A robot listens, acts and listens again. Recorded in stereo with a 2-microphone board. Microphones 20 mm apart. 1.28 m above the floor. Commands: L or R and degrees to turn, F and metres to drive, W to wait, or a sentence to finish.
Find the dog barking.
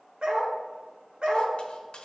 R55
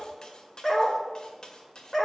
Facing the dog barking.